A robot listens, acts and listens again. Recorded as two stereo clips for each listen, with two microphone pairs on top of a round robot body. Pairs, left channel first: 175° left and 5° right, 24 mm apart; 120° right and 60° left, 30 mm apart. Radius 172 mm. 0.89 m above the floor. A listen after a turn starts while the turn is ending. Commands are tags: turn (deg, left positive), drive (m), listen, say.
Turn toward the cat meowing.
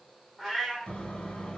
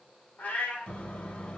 <turn deg="-105"/>
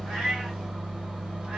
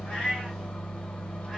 <listen/>
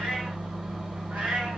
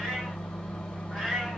<turn deg="-15"/>
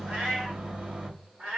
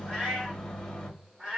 <say>Found it: a cat meowing, straight ahead.</say>